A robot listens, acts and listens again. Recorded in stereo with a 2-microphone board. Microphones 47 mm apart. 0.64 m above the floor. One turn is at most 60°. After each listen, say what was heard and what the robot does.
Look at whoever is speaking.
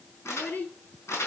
The child speaking: about 40° left or 140° left. Turn 40° left.
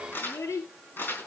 So it is at 100° left. Turn 60° left.
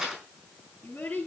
The child speaking is now 45° left. Turn 45° left.
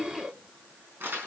Facing the child speaking.